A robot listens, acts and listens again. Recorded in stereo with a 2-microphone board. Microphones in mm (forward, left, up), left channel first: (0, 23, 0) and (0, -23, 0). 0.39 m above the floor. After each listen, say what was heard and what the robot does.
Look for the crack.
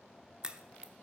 The crack: about 20° right or 160° right. Turn 20° right.
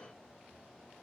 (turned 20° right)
Keep listening.
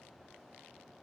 I heard a crack, but can't make it out now. It was about straight ahead or 140° right.